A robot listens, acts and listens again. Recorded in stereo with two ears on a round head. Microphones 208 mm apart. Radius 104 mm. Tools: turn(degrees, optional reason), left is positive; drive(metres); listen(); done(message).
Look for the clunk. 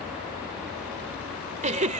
listen()
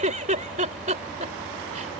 listen()
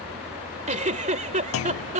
turn(degrees=60, reason="The clunk: about 60° left or 120° left.")
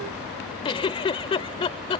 listen()
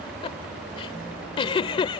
done("I heard a clunk, but can't make it out now. It was about straight ahead or 60° left.")